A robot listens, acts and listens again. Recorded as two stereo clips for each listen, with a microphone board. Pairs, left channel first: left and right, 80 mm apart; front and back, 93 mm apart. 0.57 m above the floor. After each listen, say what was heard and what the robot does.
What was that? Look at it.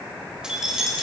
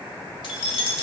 Facing the keys jangling.